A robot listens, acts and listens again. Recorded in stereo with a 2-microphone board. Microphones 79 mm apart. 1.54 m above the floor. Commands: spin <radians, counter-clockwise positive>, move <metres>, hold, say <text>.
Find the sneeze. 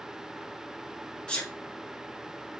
spin 0.52
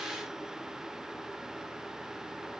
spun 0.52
hold
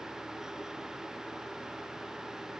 say I heard a sneeze, but can't make it out now. It was about 15° right or 135° left.